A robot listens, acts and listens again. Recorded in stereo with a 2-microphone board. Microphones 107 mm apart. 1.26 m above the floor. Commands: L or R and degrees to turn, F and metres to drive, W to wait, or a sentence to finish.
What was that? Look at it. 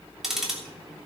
R30
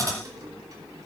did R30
R150
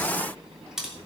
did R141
Facing the ticking, 2 to 4 m away.